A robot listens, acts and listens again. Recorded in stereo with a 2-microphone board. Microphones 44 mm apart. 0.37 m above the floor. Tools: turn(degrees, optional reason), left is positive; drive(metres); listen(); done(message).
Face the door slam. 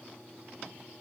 listen()
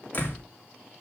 turn(degrees=40, reason="The door slam: about 40° left or 140° left.")
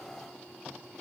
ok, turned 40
listen()
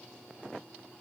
done("I heard a door slam, but can't make it out now. It was about straight ahead or 100° left.")